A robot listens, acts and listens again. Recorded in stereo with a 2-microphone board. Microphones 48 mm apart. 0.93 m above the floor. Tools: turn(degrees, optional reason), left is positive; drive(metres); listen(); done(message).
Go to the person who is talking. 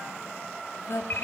turn(degrees=65, reason="The woman speaking: about 65° left or 115° left.")
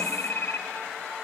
listen()
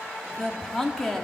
drive(metres=1.0)
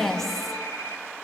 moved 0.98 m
drive(metres=1.0)
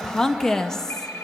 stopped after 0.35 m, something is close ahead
turn(degrees=15, reason="The woman speaking is now 15° left.")
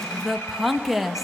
done("Arrived at the woman speaking, straight ahead.")